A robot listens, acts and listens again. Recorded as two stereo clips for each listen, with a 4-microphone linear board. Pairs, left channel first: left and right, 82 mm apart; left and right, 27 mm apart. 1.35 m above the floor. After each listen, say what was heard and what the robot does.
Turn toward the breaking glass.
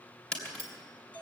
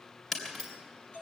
The breaking glass: about 20° left or 160° left. Turn 20° left.
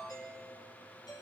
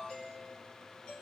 Keep listening.
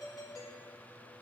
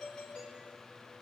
I heard breaking glass, but can't make it out now. It was about straight ahead or 140° left.